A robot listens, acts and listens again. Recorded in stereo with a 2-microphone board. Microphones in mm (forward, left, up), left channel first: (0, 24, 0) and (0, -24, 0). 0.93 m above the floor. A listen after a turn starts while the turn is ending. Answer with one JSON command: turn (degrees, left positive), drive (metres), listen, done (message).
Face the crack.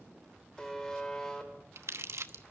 {"listen": true}
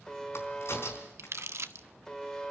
{"turn": 65}
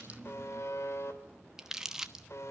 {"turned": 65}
{"listen": true}
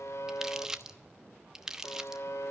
{"done": "I heard a crack, but can't make it out now. It was about straight ahead or 50° left."}